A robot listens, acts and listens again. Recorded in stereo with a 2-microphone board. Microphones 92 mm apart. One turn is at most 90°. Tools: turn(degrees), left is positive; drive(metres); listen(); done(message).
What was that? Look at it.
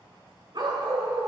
turn(degrees=-50)
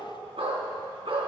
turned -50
turn(degrees=-80)
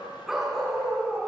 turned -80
done("Facing the dog barking.")